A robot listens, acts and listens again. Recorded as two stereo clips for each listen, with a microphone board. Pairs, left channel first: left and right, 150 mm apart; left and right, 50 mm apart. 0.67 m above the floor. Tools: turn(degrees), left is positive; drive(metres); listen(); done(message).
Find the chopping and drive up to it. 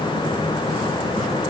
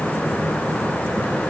listen()
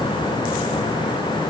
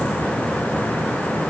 listen()
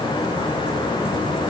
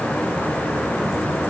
done("I can't make out chopping to turn to.")